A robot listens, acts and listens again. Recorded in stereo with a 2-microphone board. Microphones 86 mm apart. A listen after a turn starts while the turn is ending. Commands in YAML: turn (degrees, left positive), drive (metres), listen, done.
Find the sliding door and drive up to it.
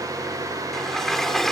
turn: 30
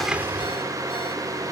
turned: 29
listen: true
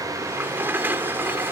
turn: -25
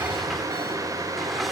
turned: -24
listen: true
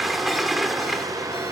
drive: 1.0
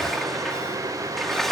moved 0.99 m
drive: 1.0
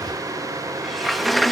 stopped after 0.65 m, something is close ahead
done: "I am next to the sliding door."